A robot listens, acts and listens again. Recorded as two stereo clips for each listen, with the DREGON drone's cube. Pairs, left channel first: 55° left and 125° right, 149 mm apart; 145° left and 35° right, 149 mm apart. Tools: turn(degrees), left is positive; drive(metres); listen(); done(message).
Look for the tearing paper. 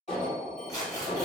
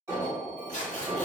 turn(degrees=120)
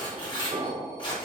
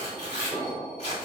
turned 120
done("Facing the tearing paper, under 1 m away.")